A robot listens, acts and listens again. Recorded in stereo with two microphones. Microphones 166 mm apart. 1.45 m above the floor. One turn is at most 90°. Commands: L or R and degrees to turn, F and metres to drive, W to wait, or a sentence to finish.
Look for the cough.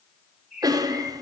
R20
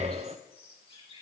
W
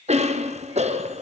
R90
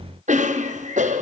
R50
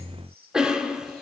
Found it: a cough, straight ahead, under 1 m away.